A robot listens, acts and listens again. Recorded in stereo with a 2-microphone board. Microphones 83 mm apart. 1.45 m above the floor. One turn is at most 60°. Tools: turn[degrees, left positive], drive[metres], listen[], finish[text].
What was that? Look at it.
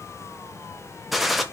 Action: turn[30]
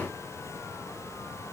Action: listen[]
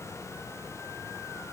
Action: finish[I heard a gunshot, but can't make it out now. It was about 30° right or 150° left.]